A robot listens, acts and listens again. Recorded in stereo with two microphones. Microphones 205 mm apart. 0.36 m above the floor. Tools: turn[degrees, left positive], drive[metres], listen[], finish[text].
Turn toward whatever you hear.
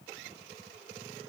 Action: listen[]
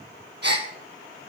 Thought: The gasp: about 55° right or 125° right.
Action: turn[-55]
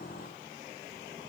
Action: listen[]
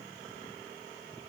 Action: finish[I heard a gasp, but can't make it out now. It was about straight ahead or 70° right.]